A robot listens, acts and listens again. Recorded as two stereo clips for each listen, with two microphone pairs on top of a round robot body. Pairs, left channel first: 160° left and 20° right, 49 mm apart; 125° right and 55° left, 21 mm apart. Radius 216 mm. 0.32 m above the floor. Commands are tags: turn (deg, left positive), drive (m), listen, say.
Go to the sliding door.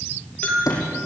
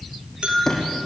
<turn deg="165"/>
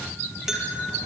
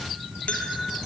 <listen/>
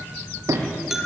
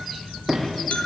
<turn deg="-30"/>
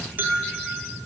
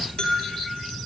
<listen/>
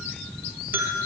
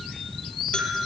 <listen/>
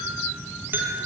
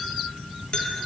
<say>Facing where the sliding door came from. I can't hear it now. I did not reach it.</say>